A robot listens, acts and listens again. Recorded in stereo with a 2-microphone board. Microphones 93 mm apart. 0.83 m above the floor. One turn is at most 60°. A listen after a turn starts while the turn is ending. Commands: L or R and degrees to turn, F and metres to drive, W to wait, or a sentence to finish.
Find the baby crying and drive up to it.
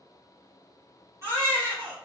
R30
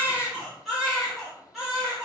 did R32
F1.0
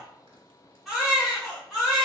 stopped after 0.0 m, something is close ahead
Blocked. The baby crying is further on, straight ahead.